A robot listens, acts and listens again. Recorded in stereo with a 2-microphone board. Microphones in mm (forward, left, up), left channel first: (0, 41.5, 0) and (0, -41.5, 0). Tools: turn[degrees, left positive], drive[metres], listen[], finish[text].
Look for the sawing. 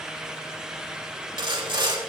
Action: turn[-90]
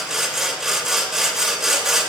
Action: finish[Found it: sawing, straight ahead.]